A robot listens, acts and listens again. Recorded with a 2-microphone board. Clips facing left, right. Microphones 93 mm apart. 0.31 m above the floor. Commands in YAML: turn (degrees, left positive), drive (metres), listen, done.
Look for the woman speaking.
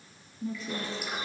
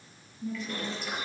turn: 40
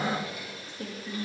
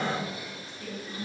turn: 110
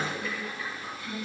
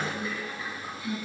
turn: -15
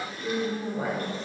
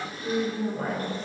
done: "Found it: a woman speaking, straight ahead, over 4 m away."